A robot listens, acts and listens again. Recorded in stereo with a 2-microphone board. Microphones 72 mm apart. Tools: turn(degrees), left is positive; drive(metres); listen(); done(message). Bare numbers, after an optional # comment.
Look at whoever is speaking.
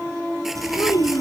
# The child speaking: about 65° left or 115° left.
turn(65)
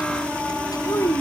# So it is at 50° left.
turn(50)
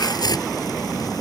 listen()
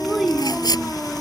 done("Facing the child speaking.")